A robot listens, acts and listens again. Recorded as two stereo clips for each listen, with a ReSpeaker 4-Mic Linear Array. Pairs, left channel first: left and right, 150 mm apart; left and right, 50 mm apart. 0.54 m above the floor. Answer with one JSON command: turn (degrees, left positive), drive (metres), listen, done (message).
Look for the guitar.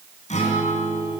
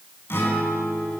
{"turn": 50}
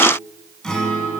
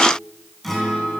{"done": "Facing the guitar."}